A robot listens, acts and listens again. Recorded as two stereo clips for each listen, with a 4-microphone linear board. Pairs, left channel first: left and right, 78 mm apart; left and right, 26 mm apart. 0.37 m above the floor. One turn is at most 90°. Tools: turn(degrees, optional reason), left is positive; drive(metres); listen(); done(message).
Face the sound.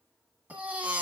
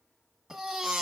turn(degrees=-20, reason="The baby crying: about 20° right or 160° right.")
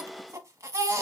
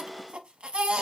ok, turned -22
turn(degrees=-90, reason="So it is at 140° right.")
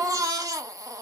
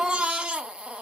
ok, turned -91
turn(degrees=-50, reason="The baby crying is now 50° right.")
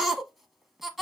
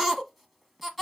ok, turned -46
done("Found it: a baby crying, straight ahead, 1 to 2 m away.")